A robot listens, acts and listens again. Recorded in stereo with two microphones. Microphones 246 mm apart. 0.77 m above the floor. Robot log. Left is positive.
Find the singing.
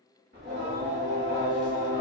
note: The singing: about 50° right or 130° right.
cmd yaw -50
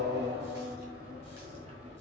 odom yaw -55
note: So it is at 30° right.
cmd yaw -30
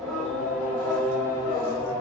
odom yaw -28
note: The singing is now 15° left.
cmd yaw +15
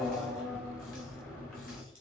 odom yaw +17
end: Found it: singing, straight ahead.